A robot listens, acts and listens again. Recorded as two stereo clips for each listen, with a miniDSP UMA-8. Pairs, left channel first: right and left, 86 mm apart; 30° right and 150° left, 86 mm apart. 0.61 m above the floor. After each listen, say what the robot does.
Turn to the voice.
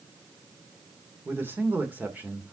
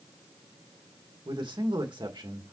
Turn 160° left.
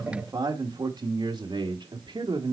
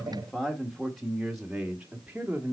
Turn 75° left.
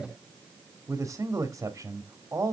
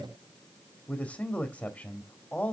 Turn 35° left.
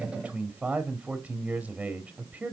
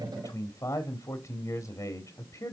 Turn 10° left.
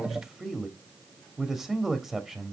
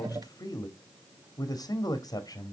Facing the man speaking, 1 to 2 m away.